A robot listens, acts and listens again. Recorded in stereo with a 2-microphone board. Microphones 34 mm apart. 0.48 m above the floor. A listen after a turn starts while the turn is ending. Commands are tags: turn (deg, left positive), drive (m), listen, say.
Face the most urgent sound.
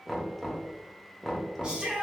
<turn deg="-35"/>
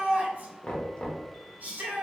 <turn deg="-110"/>
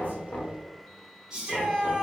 <turn deg="-15"/>
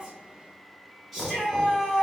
<say>Found it: a shout, straight ahead, 1 to 2 m away.</say>